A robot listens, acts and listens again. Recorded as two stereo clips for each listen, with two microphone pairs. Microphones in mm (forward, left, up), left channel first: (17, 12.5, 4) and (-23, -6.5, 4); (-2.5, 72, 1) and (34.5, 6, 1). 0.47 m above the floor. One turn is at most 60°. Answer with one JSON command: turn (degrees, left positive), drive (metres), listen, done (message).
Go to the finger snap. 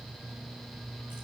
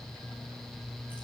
{"listen": true}
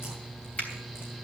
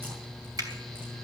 {"listen": true}
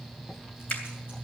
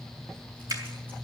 {"turn": -30}
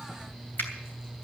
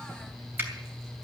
{"drive": 1.0}
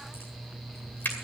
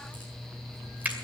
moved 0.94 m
{"drive": 1.0}
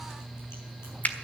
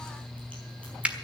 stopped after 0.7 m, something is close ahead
{"done": "Arrived at the finger snap, straight ahead."}